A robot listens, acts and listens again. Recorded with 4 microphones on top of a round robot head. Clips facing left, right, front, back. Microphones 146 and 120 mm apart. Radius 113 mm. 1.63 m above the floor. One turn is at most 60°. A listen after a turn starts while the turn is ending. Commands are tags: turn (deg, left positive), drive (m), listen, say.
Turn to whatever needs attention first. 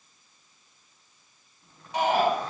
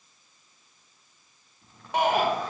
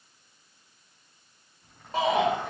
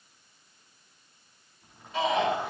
<turn deg="-60"/>
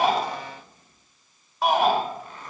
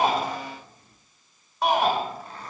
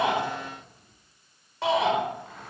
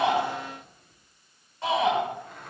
<say>Facing the shout.</say>